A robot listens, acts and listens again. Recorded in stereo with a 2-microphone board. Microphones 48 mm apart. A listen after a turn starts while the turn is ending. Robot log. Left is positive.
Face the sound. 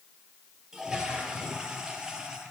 cmd yaw -30
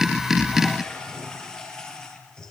note: So it is at 15° left.
cmd yaw +15
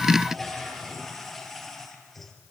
end: Facing the toilet flushing, over 4 m away.